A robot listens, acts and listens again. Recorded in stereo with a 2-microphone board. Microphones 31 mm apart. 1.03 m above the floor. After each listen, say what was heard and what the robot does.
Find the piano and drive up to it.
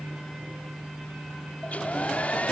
Keep listening.
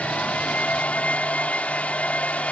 Keep listening.
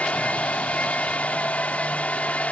I can't make out a piano, only a hair dryer.